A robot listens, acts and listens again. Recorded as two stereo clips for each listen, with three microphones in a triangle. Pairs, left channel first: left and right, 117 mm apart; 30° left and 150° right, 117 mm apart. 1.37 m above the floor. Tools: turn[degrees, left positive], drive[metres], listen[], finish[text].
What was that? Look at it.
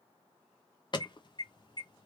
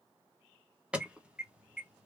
Thought: The alarm: 135° left.
Action: turn[135]
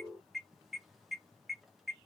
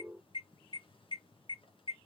Action: finish[Found it: an alarm, straight ahead, under 1 m away.]